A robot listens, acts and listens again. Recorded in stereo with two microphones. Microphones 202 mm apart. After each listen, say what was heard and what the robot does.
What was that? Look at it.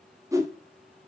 The whoosh: about 15° right or 165° right. Turn 15° right.
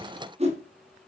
So it is at 150° right. Turn 150° right.
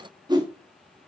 The whoosh is now 20° right. Turn 20° right.
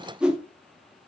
Facing the whoosh.